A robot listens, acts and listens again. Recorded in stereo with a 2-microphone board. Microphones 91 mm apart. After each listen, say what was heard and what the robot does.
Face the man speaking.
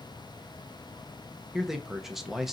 Turn 30° right.
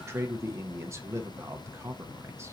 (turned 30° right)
So it is at 145° right. Turn 145° right.
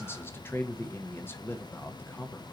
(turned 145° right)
The man speaking is now 30° left. Turn 30° left.
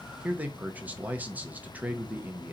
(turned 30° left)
The man speaking is now 20° right. Turn 20° right.
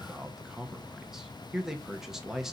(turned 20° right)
Facing the man speaking, under 1 m away.